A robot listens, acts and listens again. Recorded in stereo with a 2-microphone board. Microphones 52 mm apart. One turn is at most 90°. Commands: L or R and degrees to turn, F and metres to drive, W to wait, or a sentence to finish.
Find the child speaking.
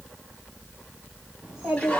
R30
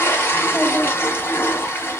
W
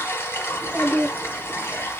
L30
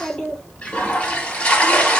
Found it: a child speaking, straight ahead.